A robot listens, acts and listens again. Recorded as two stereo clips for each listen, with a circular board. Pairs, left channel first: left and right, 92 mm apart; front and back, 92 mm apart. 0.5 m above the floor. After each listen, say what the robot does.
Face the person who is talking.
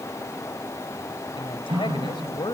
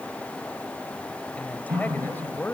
Turn 65° left.
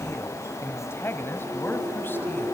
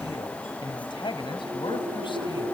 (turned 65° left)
Turn 25° left.
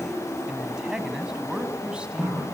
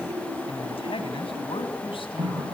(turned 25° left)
Turn 10° right.
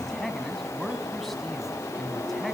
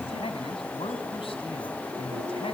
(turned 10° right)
Found it: a man speaking, straight ahead, 2 to 4 m away.